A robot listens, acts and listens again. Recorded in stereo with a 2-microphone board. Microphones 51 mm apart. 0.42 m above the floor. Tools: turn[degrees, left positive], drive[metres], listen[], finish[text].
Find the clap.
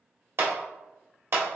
Thought: The clap: about 55° right or 125° right.
Action: turn[-55]
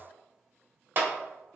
Thought: So it is at 50° right.
Action: turn[-50]
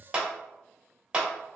Thought: The clap is now 20° right.
Action: turn[-20]
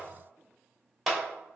Action: finish[Found it: a clap, straight ahead, 1 to 2 m away.]